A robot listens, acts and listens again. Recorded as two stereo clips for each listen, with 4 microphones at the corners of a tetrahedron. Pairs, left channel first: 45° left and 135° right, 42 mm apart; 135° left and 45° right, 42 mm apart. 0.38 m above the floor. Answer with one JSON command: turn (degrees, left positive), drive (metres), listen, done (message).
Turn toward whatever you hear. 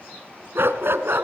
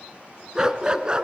{"turn": -110}
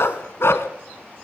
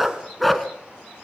{"turn": 50}
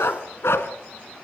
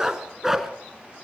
{"turn": 40}
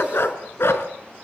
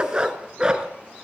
{"turn": 25}
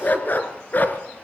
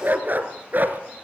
{"done": "Facing the dog barking."}